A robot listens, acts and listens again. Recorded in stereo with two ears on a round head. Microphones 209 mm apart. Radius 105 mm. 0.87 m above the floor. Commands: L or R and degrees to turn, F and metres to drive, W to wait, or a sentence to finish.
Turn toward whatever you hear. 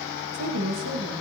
R90
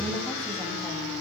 W
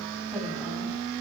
W
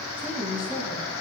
Found it: a woman speaking, straight ahead, over 4 m away.